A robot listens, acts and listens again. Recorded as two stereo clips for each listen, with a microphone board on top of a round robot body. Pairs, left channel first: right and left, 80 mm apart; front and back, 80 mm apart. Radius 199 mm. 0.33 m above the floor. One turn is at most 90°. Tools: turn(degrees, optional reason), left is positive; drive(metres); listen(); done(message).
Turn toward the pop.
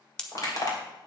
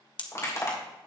turn(degrees=-10, reason="The pop: 10° right.")
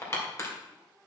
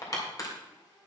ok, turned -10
done("I heard a pop from this way, but can't make it out now.")